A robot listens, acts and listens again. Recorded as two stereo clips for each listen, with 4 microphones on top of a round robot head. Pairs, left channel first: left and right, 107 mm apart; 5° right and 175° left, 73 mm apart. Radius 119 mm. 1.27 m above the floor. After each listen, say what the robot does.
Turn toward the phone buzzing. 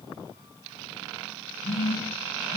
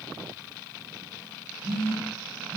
Turn 120° left.
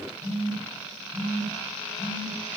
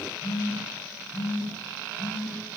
Found it: a phone buzzing, straight ahead.